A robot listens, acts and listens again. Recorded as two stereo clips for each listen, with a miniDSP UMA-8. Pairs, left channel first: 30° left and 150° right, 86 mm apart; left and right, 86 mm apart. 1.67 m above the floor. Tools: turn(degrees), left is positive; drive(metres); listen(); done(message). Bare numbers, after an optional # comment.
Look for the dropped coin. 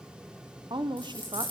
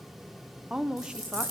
# The dropped coin: 45° right.
turn(-45)
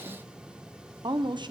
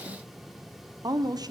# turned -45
done("I heard a dropped coin from this way, but can't make it out now.")